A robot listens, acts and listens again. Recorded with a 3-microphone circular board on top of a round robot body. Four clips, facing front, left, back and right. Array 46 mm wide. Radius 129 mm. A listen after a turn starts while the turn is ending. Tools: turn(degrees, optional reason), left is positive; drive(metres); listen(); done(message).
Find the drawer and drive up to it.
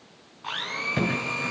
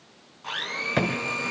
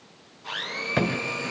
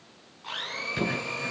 turn(degrees=110, reason="The drawer: 110° left.")
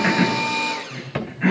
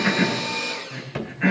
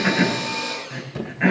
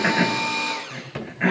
drive(metres=1.0)
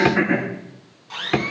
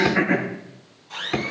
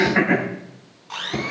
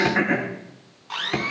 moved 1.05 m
drive(metres=1.0)
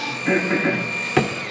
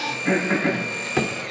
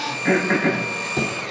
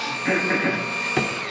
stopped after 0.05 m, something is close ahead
done("Arrived at the drawer, straight ahead.")